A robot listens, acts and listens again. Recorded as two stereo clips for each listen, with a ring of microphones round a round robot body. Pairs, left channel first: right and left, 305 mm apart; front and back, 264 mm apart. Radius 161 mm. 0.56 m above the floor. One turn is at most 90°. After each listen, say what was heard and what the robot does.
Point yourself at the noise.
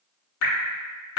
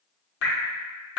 The dripping: 45° right. Turn 45° right.
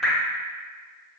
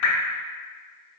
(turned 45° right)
Found it: dripping, straight ahead.